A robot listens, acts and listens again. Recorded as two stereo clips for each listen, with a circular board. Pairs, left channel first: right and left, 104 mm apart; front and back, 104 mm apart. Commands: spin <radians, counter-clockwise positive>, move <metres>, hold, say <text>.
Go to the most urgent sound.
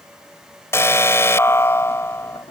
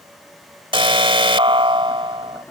spin -2.71
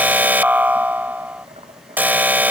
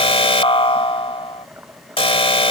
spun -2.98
spin 0.35
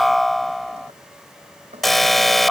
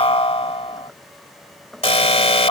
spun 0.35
move 1.0
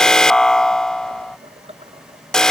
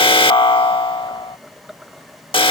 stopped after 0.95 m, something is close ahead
spin -0.17
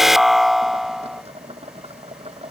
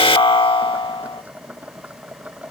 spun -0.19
say Arrived at the alarm, straight ahead.